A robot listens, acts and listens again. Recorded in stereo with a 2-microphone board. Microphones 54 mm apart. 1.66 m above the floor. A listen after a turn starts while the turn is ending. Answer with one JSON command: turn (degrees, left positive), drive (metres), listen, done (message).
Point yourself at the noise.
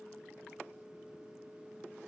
{"listen": true}
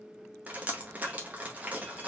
{"turn": -25}
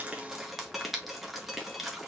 {"done": "Found it: dripping, straight ahead."}